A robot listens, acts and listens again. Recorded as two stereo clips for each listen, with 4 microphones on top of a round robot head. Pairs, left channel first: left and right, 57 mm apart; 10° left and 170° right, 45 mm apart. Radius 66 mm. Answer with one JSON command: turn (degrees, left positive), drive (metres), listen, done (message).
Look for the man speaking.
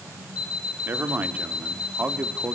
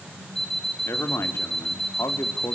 {"turn": -15}
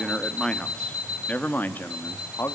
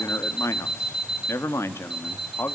{"turn": 45}
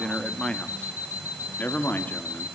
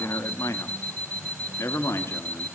{"turn": 30}
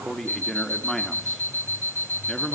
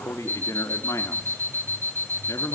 {"done": "Found it: a man speaking, straight ahead."}